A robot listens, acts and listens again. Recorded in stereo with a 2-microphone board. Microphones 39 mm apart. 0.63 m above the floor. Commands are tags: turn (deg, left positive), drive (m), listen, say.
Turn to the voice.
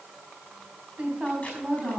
<turn deg="-35"/>
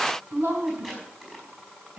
<turn deg="-110"/>
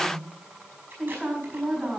<say>Facing the woman speaking.</say>